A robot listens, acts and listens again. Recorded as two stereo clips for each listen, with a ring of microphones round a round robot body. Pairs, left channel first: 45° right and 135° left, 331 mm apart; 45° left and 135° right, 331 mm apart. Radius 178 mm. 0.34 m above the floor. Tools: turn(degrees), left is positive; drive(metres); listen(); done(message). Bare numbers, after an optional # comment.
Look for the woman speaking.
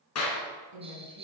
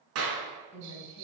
# The woman speaking: 115° left.
turn(115)
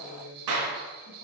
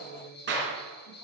listen()
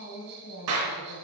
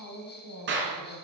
done("Facing the woman speaking, 2 to 4 m away.")